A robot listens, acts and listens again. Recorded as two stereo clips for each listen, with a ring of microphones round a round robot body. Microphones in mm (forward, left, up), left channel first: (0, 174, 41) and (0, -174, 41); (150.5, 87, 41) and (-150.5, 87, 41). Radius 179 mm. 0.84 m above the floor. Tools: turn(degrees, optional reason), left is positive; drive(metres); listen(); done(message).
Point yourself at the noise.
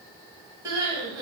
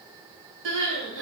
turn(degrees=-170, reason="The crying: 170° right.")
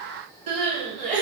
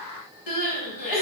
turn(degrees=-20, reason="The crying is now 20° right.")
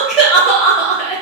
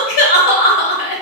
done("Found it: crying, straight ahead, under 1 m away.")